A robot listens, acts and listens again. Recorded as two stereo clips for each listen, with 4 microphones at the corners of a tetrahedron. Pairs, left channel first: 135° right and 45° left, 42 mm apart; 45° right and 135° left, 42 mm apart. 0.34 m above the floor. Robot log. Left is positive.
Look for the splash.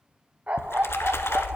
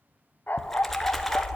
note: The splash: 130° right.
cmd yaw -130
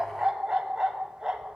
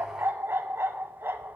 end: Facing where the splash came from. I can't hear it now.